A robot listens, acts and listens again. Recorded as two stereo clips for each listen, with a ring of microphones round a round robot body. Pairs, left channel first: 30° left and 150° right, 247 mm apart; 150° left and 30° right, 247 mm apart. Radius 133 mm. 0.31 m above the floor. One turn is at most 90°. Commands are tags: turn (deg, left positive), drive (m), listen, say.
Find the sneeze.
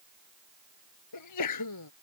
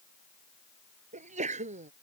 <turn deg="35"/>
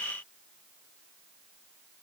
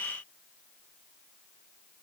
<say>Facing where the sneeze came from. I can't hear it now.</say>